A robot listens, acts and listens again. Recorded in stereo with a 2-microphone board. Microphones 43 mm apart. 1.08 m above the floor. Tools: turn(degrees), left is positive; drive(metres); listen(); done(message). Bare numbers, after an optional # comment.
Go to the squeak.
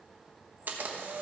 listen()
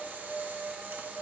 listen()
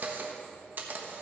done("I can't make out a squeak to turn to.")